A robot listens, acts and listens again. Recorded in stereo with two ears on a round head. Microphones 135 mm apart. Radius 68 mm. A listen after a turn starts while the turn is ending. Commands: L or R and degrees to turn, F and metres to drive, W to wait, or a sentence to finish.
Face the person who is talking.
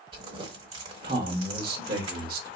R70
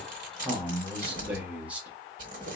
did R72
R10
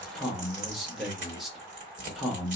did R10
Facing the man speaking.